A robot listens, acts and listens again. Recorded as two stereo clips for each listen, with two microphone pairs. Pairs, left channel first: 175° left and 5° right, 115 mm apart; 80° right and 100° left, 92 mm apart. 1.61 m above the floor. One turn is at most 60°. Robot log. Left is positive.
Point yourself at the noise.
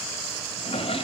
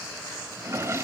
note: The drawer: 155° left.
cmd yaw +60
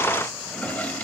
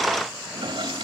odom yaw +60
note: The drawer is now 100° left.
cmd yaw +60
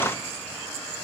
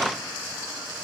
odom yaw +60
note: Nothing new. It was at 40° left.
cmd yaw +40
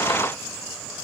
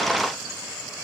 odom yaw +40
cmd idle
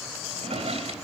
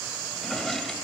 end: Found it: a drawer, straight ahead, 2 to 4 m away.